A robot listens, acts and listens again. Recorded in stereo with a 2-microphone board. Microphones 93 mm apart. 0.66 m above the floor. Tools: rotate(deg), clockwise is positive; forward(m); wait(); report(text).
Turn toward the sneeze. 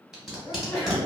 rotate(-25)
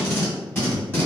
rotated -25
wait()
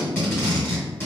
report("I heard a sneeze, but can't make it out now. It was about straight ahead or 130° left.")